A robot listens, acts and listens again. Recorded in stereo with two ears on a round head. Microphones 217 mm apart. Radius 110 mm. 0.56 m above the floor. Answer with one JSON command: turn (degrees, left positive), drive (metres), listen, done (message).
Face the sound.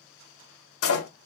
{"turn": 70}
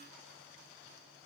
{"listen": true}
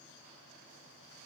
{"done": "I heard a door slam, but can't make it out now. It was about straight ahead or 40° left."}